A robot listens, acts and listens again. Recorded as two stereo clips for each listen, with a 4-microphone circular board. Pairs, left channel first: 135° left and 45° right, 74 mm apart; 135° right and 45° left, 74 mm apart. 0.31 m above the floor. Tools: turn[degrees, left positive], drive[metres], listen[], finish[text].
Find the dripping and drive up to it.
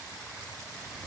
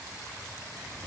Action: listen[]
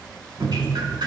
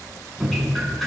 Thought: The dripping: 50° right.
Action: turn[-50]
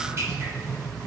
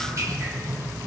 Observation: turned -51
Action: drive[1.0]
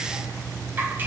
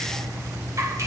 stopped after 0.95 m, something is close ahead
Thought: The dripping is now 10° left.
Action: turn[10]
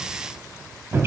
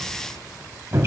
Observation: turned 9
Action: finish[Arrived at the dripping, straight ahead.]